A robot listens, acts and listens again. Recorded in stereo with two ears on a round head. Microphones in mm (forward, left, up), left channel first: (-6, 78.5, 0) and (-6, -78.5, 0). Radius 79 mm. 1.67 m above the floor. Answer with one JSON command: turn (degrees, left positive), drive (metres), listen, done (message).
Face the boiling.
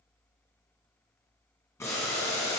{"turn": 15}
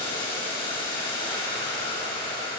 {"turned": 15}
{"turn": 150}
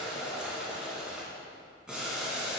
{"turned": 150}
{"done": "Found it: boiling, straight ahead."}